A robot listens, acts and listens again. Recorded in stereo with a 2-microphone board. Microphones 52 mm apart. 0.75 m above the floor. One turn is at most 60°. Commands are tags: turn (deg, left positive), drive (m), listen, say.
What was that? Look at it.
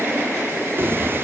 <turn deg="-50"/>
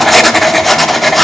<say>Facing the writing.</say>